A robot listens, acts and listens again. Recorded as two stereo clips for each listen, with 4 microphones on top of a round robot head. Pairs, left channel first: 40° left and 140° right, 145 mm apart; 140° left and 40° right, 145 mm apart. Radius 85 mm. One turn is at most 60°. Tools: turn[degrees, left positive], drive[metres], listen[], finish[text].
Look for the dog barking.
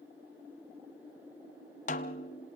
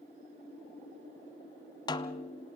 Action: listen[]
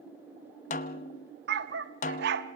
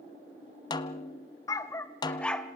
Thought: The dog barking: 135° right.
Action: turn[-60]
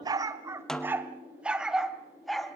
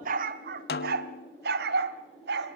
Thought: The dog barking is now 50° right.
Action: turn[-50]
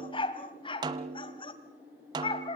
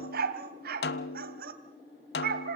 Thought: The dog barking is now 20° right.
Action: turn[-20]
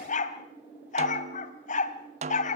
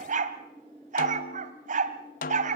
Action: finish[Found it: a dog barking, straight ahead, 1 to 2 m away.]